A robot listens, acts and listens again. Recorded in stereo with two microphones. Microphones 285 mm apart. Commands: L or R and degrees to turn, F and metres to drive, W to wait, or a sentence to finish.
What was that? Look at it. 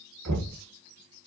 R90
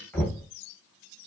Facing the knocking.